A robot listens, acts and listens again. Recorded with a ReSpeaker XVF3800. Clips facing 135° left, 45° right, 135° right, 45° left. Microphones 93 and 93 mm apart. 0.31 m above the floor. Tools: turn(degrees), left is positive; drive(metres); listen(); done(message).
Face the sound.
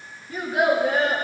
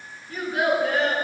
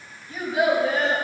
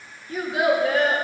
turn(degrees=65)
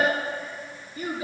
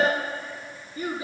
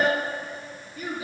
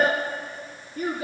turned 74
done("Facing the child speaking, 2 to 4 m away.")